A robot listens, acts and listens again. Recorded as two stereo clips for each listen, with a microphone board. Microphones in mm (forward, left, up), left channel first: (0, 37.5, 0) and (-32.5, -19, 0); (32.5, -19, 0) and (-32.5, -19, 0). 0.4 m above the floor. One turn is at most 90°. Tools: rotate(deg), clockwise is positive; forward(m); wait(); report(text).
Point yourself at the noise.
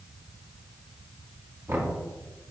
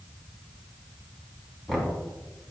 rotate(85)
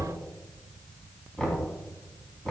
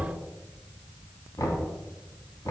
rotate(15)
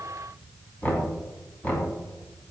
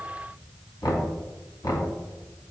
report("Facing the knocking.")